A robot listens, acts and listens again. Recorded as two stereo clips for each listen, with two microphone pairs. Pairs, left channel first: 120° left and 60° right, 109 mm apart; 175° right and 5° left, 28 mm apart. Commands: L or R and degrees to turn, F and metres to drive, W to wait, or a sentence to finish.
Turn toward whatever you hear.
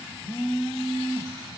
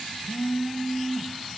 L75
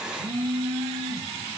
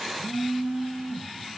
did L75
R20
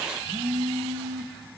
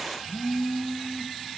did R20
Facing the phone buzzing, under 1 m away.